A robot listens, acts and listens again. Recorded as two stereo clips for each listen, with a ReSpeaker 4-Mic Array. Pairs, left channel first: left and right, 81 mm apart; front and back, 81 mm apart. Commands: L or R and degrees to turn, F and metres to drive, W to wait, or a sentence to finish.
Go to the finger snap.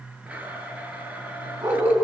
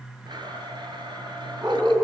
W
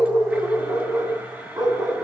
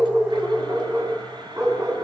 W
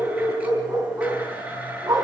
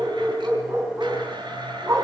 I can't make out a finger snap, only a dog barking and a blender.